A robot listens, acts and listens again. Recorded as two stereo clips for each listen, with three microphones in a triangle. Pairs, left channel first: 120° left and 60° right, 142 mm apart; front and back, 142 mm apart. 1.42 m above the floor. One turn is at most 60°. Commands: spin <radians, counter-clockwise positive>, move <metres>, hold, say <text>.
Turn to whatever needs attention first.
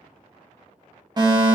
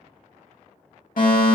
say Facing the fire alarm.